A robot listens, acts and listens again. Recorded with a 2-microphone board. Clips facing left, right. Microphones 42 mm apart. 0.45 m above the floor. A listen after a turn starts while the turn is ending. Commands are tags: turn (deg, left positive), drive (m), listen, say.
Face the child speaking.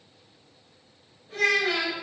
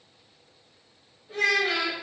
<turn deg="-15"/>
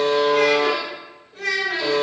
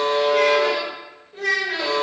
<turn deg="-20"/>
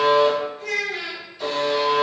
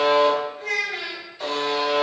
<turn deg="-25"/>
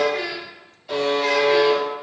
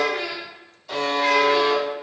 <turn deg="-25"/>
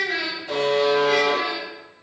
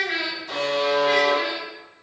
<turn deg="-30"/>
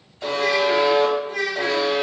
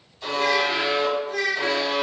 <turn deg="15"/>
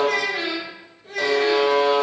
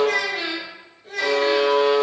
<turn deg="10"/>
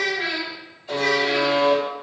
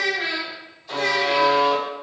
<say>Found it: a child speaking, straight ahead, 1 to 2 m away.</say>